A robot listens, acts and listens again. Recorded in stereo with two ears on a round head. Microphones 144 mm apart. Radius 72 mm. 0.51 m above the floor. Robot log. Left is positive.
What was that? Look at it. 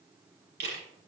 note: The camera shutter: about 75° right or 105° right.
cmd yaw -75
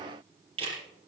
note: So it is at 35° right.
cmd yaw -35
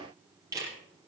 note: The camera shutter is now 20° right.
cmd yaw -20
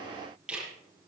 end: Found it: a camera shutter, straight ahead, over 4 m away.